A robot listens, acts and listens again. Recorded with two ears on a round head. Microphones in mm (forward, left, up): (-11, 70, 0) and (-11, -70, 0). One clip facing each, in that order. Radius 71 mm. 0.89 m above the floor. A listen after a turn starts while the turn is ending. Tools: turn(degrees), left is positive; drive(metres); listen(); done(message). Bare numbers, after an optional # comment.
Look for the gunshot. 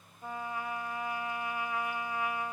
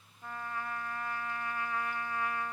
listen()
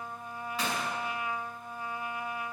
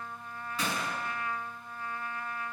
turn(-90)
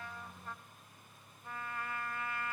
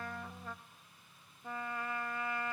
done("Facing where the gunshot came from. I can't hear it now.")